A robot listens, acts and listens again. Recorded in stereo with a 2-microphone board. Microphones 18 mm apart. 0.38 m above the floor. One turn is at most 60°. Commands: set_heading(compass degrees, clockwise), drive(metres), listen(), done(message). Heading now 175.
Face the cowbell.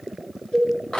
set_heading(115)
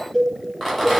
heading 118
set_heading(73)
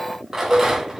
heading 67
done("Found it: a cowbell, straight ahead.")